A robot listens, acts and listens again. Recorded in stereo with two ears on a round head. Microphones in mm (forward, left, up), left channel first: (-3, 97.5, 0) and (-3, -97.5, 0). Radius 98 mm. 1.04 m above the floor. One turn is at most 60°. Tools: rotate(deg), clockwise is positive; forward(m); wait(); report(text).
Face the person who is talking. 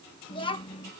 rotate(-25)
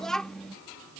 report("Facing the child speaking.")